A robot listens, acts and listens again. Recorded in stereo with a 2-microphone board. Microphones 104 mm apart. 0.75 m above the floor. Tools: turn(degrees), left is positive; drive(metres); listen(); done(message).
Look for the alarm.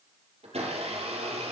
listen()
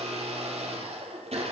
listen()
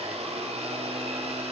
done("I can't make out an alarm, only a blender.")